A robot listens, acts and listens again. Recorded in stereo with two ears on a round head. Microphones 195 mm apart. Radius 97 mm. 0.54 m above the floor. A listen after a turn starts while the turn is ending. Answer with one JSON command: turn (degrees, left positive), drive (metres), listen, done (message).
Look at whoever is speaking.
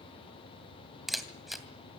{"listen": true}
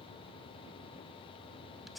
{"listen": true}
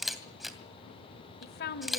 {"turn": 45}
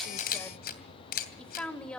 {"done": "Found it: a woman speaking, straight ahead, 1 to 2 m away."}